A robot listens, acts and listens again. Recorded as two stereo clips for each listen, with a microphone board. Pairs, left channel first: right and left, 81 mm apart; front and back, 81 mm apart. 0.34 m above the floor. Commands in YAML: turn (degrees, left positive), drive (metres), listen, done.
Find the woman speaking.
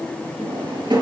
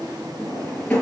listen: true
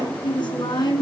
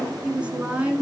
turn: -110
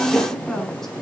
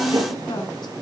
done: "Found it: a woman speaking, straight ahead, 2 to 4 m away."